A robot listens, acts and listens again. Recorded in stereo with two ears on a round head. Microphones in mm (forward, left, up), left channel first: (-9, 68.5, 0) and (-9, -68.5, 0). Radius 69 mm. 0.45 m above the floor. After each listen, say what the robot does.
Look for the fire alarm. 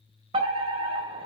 Turn 40° right.
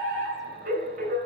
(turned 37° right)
Turn 95° right.
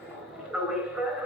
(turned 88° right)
Facing the fire alarm.